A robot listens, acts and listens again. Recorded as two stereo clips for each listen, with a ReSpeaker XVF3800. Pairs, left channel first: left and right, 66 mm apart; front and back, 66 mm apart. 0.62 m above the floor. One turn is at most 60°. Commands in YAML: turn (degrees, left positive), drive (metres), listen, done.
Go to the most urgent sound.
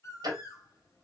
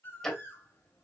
listen: true
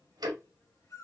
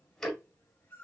listen: true
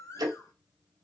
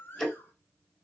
done: "I can't make out anything urgent to turn to."